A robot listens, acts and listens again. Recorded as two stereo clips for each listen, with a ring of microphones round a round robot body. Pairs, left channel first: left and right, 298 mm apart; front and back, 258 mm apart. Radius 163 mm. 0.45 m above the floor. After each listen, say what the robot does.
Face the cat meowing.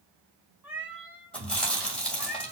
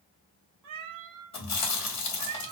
Turn 175° right.
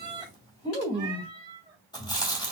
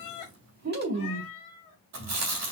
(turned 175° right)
Turn 15° right.
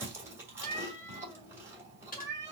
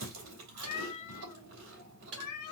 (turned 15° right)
Turn 10° left.
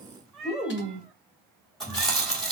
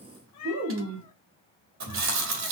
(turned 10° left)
Facing the cat meowing.